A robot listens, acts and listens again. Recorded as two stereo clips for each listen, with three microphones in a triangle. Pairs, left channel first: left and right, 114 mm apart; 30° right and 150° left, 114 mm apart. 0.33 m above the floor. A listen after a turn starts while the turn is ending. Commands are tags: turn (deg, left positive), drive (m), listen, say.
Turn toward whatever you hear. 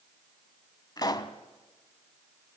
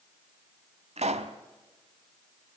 <turn deg="140"/>
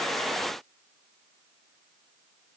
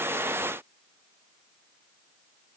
<say>Facing where the pop came from. I can't hear it now.</say>